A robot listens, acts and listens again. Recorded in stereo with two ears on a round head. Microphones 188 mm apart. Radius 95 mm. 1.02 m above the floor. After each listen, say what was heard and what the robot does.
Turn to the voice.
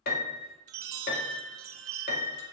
Keep listening.
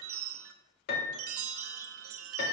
Keep listening.
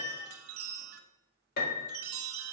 I can't make out anyone speaking, only a piano and a chime.